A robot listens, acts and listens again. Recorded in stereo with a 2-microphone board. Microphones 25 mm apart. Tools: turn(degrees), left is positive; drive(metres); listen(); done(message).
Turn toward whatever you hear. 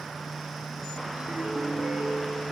turn(degrees=-70)
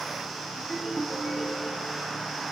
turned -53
turn(degrees=-15)
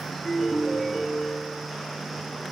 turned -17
done("Found it: a ringtone, straight ahead.")